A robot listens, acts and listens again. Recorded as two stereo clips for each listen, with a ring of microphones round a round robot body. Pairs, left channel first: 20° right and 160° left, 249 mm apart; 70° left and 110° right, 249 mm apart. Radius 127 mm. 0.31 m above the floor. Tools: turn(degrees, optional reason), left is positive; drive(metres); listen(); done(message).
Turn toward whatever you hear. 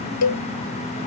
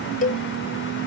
done("Found it: a cowbell, straight ahead.")